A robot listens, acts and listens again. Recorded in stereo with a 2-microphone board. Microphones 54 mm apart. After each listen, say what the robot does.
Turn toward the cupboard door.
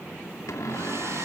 Turn 70° left.
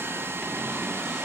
Keep listening.
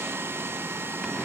Keep listening.
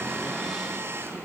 I heard a cupboard door, but can't make it out now. It was about straight ahead or 40° left.